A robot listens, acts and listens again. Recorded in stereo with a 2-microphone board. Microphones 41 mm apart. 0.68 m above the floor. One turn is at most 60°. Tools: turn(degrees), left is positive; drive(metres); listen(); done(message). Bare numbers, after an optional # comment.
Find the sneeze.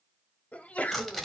# The sneeze: about 30° left or 150° left.
turn(30)
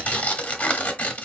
listen()
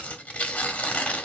done("I heard a sneeze, but can't make it out now. It was about straight ahead or 120° left.")